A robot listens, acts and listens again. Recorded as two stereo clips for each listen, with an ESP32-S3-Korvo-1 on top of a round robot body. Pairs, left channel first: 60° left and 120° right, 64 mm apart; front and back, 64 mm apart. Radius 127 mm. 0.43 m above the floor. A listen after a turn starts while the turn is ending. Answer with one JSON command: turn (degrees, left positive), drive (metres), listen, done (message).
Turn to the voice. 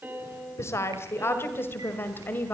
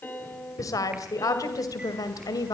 {"done": "Facing the woman speaking, 2 to 4 m away."}